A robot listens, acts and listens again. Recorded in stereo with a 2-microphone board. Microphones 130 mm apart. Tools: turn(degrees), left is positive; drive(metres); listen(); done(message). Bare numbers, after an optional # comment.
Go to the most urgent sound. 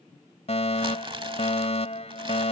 # The fire alarm: about 55° left or 125° left.
turn(55)
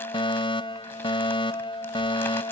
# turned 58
# So it is at 55° left.
turn(55)
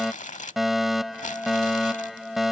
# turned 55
drive(1.0)
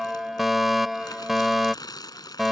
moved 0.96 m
drive(1.0)
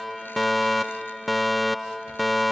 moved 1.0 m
drive(1.0)
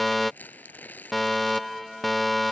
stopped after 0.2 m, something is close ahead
done("I am next to the fire alarm.")